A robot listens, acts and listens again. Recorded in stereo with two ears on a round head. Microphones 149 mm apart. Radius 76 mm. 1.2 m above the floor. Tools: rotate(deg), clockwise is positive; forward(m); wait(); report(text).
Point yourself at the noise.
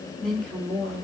rotate(-30)
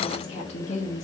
rotate(-135)
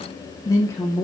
rotate(-15)
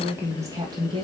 rotate(30)
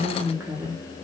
rotate(20)
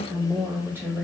rotate(10)
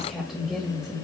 report("Facing the woman speaking.")